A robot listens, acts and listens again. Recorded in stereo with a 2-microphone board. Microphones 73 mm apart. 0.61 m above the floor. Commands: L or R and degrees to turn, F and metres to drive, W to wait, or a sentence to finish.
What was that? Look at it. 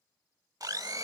R60
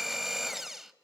Facing the blender.